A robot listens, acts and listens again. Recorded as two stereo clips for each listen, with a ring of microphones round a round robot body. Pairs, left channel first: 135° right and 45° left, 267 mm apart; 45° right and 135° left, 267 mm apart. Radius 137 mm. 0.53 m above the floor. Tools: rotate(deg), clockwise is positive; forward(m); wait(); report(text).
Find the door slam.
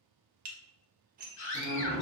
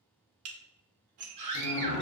rotate(90)
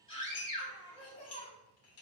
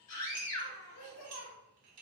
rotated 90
report("Facing where the door slam came from. I can't hear it now.")